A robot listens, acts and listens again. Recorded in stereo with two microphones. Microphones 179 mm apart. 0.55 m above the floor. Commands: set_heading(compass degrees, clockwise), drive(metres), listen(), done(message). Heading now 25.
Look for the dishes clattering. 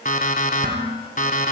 set_heading(75)
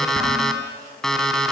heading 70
listen()
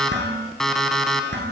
set_heading(150)
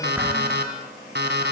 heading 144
set_heading(154)
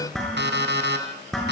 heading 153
done("Facing the dishes clattering, over 4 m away.")